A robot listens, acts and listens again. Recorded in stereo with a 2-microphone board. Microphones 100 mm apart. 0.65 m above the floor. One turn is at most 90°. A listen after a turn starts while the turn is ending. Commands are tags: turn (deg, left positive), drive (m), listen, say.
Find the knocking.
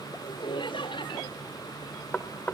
<turn deg="30"/>
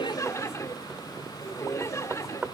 <turn deg="-15"/>
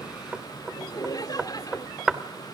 <say>Found it: knocking, straight ahead.</say>